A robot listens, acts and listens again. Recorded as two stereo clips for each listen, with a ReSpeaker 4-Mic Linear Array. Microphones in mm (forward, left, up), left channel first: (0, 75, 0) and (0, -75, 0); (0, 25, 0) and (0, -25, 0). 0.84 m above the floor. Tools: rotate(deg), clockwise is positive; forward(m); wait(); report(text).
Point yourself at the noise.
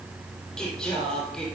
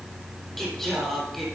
rotate(-30)
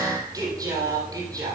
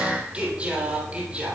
rotate(25)
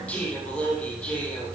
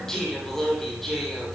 report("Facing the singing, 2 to 4 m away.")